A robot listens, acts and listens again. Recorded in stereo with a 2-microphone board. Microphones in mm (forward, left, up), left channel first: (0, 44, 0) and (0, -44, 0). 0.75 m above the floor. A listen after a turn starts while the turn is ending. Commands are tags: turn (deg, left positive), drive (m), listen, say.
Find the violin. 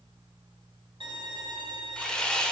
<turn deg="-90"/>
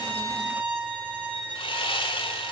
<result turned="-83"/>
<turn deg="-15"/>
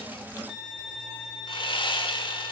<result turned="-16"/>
<say>Facing the violin, 2 to 4 m away.</say>